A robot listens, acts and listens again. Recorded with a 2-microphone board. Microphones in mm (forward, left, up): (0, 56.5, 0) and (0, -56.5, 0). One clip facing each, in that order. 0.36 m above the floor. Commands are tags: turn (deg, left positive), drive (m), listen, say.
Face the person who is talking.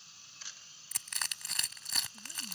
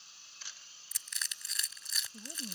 <turn deg="-50"/>
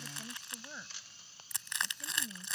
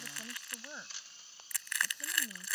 <turn deg="-15"/>
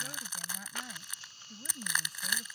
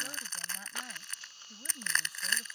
<say>Facing the woman speaking.</say>